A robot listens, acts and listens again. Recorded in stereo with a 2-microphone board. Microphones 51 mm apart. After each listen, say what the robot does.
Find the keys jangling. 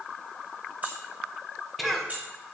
Turn 35° right.
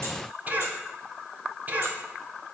Keep listening.
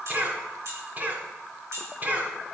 Turn 105° right.
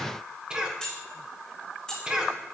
Turn 15° left.
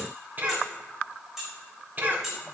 Found it: keys jangling, straight ahead, 2 to 4 m away.